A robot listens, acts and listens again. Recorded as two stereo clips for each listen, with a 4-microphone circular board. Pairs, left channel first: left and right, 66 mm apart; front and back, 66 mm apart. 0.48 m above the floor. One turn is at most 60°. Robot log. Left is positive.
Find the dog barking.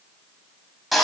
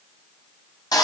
cmd idle
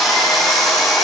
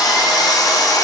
cmd idle
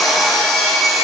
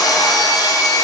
end: I can't make out a dog barking, only sawing.